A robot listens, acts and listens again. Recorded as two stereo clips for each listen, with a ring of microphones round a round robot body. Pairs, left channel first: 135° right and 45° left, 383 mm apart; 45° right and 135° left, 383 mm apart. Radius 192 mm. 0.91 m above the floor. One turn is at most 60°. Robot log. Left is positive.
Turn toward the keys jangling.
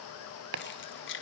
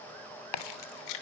note: The keys jangling: 75° right.
cmd yaw -60
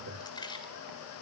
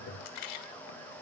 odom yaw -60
note: The keys jangling is now 55° right.
cmd yaw -55
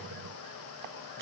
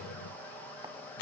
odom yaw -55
cmd idle
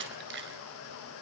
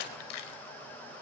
note: The keys jangling is now 20° right.
cmd yaw -20
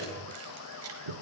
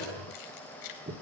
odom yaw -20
note: The keys jangling is now 10° right.
cmd yaw -10
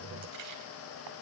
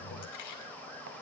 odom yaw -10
cmd idle
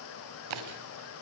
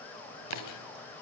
cmd idle
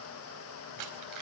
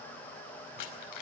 end: Found it: keys jangling, straight ahead.